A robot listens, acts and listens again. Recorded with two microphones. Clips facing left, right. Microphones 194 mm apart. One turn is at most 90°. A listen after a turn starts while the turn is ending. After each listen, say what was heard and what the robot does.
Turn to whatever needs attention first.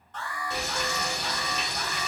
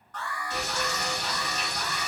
The alarm: about 25° left or 155° left. Turn 25° left.
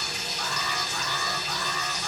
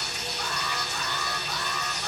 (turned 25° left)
Facing the alarm, 1 to 2 m away.